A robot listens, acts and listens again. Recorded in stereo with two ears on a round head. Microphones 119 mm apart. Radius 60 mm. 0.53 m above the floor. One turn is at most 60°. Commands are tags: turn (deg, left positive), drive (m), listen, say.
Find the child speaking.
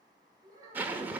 <turn deg="-30"/>
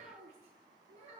<turn deg="-60"/>
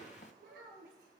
<turn deg="-60"/>
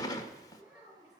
<turn deg="-10"/>
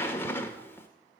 <listen/>
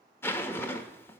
<listen/>
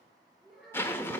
<say>Facing the child speaking.</say>